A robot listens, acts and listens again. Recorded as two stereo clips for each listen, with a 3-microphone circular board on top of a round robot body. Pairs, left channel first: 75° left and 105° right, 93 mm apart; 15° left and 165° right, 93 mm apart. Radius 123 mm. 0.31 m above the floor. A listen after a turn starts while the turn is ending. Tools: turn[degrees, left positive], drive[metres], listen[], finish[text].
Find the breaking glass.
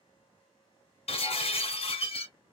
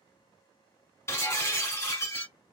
Thought: The breaking glass: 80° left.
Action: turn[80]
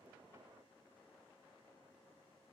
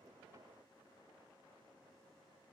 Action: finish[Facing where the breaking glass came from. I can't hear it now.]